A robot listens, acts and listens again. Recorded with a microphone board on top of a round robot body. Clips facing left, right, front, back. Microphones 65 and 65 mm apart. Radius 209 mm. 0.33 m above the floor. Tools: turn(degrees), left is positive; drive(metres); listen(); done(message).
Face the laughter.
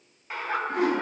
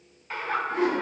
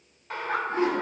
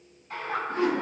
turn(degrees=15)
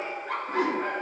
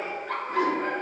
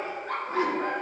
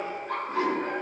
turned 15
turn(degrees=15)
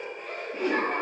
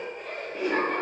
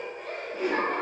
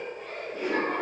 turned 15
turn(degrees=10)
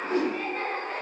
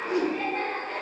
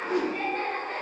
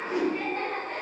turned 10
done("Facing the laughter.")